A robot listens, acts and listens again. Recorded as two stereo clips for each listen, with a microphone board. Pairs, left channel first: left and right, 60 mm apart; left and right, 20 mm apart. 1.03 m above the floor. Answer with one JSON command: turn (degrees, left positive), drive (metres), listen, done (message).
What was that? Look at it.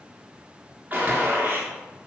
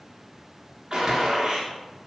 {"turn": -25}
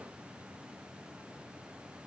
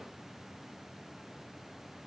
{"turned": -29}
{"listen": true}
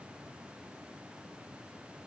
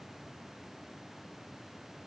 {"done": "I heard a gunshot, but can't make it out now. It was about straight ahead or 125° right."}